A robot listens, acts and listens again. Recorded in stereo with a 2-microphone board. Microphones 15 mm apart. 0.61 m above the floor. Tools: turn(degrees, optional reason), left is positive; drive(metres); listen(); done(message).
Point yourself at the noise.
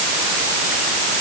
listen()
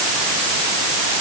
listen()
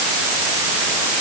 done("I can't make out anything.")